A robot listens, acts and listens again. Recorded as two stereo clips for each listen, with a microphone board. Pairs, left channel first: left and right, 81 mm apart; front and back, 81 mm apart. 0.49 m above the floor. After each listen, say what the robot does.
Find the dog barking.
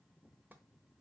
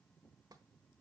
Keep listening.
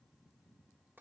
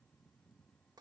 Keep listening.
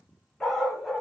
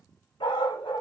Facing the dog barking, 1 to 2 m away.